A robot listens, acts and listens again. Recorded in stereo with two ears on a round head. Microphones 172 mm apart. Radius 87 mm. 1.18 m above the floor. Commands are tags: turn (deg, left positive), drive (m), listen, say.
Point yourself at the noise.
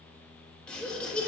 <turn deg="30"/>
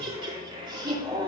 <turn deg="-20"/>
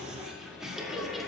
<say>Found it: laughter, straight ahead.</say>